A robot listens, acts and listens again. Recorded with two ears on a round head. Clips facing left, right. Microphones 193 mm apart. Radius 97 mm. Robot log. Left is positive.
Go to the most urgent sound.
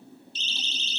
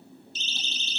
note: The siren: about 40° right or 140° right.
cmd yaw -40
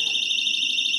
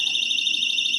note: So it is at 100° right.
cmd yaw -100
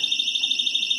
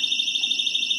note: The siren is now 15° right.
cmd yaw -15
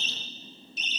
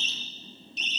cmd fwd 1.0
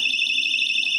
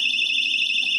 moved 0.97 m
cmd fwd 1.0
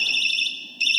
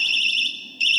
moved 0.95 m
cmd fwd 1.0
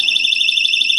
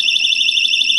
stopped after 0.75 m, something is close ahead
note: The siren is now 15° left.
cmd yaw +15
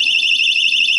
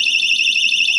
end: I am next to the siren.